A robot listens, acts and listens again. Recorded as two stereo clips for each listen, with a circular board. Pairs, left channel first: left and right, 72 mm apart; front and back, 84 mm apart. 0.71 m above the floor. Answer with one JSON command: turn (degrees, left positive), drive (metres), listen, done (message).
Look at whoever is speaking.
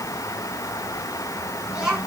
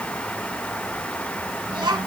{"turn": -165}
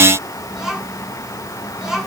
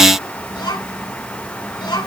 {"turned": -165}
{"done": "Facing the child speaking."}